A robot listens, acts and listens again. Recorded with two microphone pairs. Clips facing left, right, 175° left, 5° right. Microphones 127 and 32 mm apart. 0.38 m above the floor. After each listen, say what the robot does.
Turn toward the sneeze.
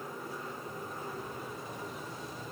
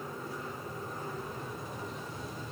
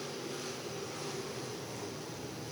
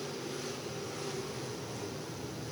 Keep listening.
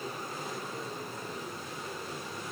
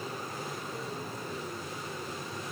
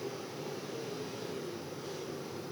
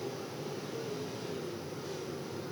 Keep listening.
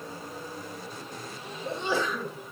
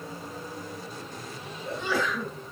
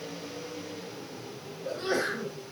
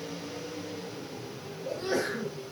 Turn 155° left.
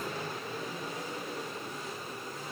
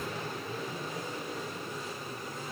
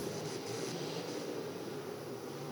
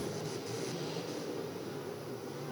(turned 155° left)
Facing where the sneeze came from. I can't hear it now.